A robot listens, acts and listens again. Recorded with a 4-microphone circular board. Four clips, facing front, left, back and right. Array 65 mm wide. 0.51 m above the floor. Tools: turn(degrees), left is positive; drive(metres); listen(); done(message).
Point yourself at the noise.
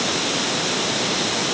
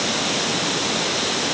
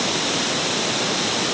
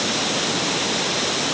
listen()
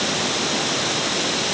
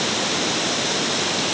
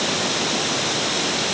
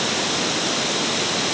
listen()
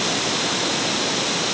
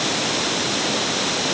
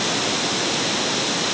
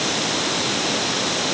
done("I can't make out anything.")